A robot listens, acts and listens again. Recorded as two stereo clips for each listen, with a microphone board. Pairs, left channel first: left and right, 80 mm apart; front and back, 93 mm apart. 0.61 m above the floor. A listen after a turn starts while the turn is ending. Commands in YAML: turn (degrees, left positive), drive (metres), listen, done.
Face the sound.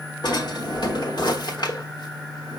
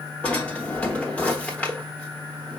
turn: 75
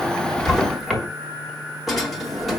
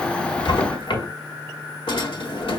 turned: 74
done: "Facing the drawer."